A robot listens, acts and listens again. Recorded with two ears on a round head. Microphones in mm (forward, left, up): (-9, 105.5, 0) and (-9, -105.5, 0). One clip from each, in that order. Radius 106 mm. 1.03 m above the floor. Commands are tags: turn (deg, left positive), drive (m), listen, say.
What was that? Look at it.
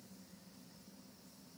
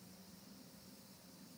<listen/>
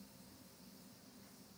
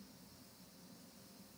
<listen/>
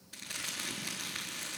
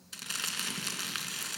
<turn deg="-75"/>
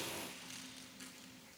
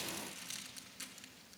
<turn deg="-25"/>
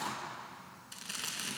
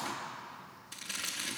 <say>Found it: crumpling, straight ahead, 2 to 4 m away.</say>